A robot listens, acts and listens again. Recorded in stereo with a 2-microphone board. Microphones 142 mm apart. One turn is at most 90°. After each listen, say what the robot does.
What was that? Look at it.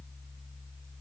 Keep listening.
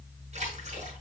Turn 50° right.
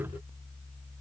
Keep listening.
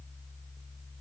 I heard a splash, but can't make it out now. It was about straight ahead or 80° right.